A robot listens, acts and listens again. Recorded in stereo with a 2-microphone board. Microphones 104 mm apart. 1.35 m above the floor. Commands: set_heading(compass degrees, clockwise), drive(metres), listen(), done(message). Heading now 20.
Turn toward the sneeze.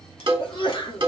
set_heading(325)
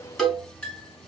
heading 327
listen()
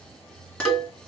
done("I heard a sneeze, but can't make it out now. It was about straight ahead or 75° left.")